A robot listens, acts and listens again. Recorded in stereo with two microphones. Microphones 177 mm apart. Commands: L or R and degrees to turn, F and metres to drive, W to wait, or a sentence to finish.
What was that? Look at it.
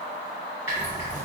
R30
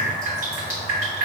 R135
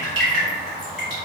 Found it: dripping, straight ahead.